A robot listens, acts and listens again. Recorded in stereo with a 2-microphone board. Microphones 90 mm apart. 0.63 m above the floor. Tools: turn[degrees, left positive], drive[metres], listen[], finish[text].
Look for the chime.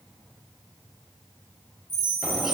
Thought: The chime: about 50° left or 130° left.
Action: turn[50]
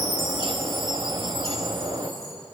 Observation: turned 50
Action: finish[Found it: a chime, straight ahead, over 4 m away.]